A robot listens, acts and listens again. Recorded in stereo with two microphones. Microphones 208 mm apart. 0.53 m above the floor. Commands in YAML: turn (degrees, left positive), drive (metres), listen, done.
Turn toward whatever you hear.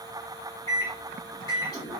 turn: 15
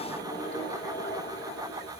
turn: 150
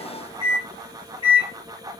turn: 30
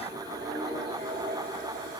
turn: -25
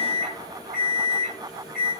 done: "Found it: a microwave, straight ahead, 1 to 2 m away."